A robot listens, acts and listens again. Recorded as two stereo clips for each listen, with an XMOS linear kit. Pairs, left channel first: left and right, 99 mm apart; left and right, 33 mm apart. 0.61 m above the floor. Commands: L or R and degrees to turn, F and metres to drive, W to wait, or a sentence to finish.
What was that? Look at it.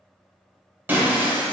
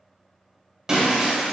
R20
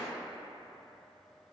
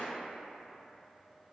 W
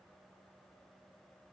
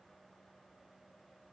I heard breaking glass, but can't make it out now. It was about straight ahead or 140° right.